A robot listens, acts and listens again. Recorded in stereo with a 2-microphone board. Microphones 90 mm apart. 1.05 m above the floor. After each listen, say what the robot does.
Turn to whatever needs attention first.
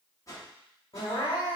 Turn 75° left.
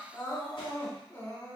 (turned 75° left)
Turn 30° left.
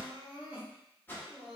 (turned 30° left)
Turn 15° right.
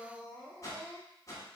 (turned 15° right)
Found it: crying, straight ahead.